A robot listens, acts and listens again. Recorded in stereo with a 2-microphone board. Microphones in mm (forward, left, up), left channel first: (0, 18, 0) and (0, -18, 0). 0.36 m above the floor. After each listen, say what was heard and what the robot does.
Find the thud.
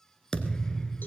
The thud: about 25° left or 155° left. Turn 25° left.
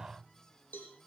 Keep listening.
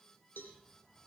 I heard a thud, but can't make it out now. It was about straight ahead or 130° left.